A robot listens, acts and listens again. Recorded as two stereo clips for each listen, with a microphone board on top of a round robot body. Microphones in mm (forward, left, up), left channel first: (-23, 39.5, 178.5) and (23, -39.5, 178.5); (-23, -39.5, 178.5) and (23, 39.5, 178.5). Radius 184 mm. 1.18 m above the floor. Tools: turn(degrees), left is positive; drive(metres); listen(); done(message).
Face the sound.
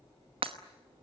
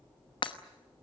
turn(degrees=-85)
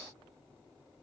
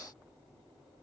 done("I heard breaking glass from this way, but can't make it out now.")